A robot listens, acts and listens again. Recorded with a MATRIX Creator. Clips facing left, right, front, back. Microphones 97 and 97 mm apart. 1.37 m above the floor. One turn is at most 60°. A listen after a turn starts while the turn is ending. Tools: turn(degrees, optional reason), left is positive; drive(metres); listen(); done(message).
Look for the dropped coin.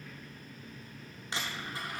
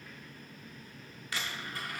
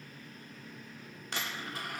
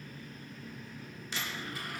turn(degrees=25, reason="The dropped coin: 25° left.")
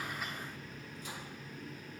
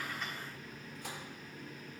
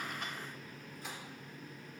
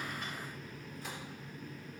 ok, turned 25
done("Facing where the dropped coin came from. I can't hear it now.")